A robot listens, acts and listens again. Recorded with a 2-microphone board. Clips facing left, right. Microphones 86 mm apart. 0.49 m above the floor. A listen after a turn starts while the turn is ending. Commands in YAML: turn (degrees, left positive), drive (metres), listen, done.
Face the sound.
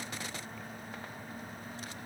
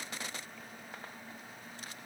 listen: true
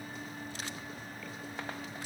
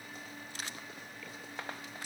listen: true
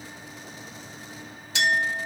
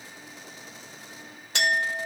turn: -55
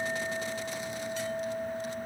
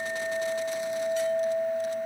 turn: -60
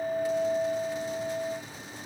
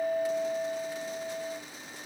done: "Found it: a clink, straight ahead."